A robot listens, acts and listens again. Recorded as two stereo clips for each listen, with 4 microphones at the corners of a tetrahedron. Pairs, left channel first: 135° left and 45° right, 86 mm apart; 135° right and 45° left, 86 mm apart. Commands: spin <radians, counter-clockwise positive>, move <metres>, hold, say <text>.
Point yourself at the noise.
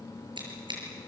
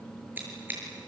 spin -0.44
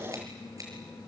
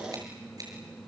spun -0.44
hold
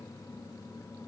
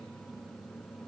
hold
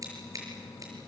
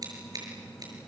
say Found it: scissors, straight ahead.